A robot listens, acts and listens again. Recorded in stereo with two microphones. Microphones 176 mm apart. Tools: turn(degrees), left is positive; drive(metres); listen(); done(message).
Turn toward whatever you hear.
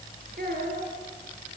turn(degrees=-65)
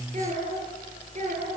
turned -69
turn(degrees=-45)
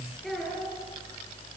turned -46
done("Found it: a child speaking, straight ahead, over 4 m away.")